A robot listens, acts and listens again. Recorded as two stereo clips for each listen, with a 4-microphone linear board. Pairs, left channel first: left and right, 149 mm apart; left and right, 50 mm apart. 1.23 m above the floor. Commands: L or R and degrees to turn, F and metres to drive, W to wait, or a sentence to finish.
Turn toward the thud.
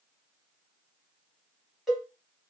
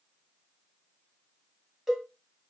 W
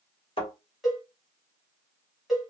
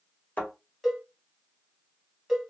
L40
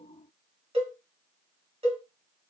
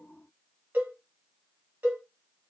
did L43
W
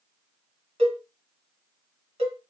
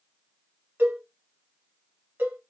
I heard a thud, but can't make it out now. It was about 5° right or 100° left.